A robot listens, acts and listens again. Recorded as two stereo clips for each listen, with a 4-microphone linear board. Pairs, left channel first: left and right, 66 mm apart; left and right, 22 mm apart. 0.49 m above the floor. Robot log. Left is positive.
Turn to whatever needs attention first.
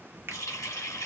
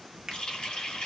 cmd idle
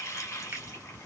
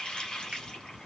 cmd idle
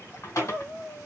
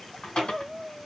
note: The crying: about 30° left or 150° left.
cmd yaw +30
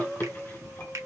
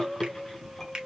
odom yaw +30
end: Facing the crying.